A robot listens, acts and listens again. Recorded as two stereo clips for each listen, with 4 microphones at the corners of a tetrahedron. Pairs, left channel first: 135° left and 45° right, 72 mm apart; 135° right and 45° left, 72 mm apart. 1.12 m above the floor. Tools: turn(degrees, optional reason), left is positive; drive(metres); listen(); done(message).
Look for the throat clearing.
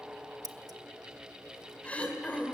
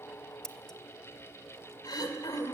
turn(degrees=-155, reason="The throat clearing: 155° right.")
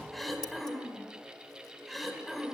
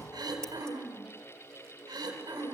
turn(degrees=45, reason="The throat clearing is now 45° left.")
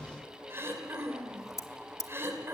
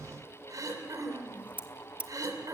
turn(degrees=10, reason="The throat clearing is now 10° left.")
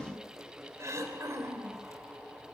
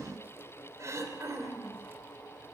done("Found it: throat clearing, straight ahead, 2 to 4 m away.")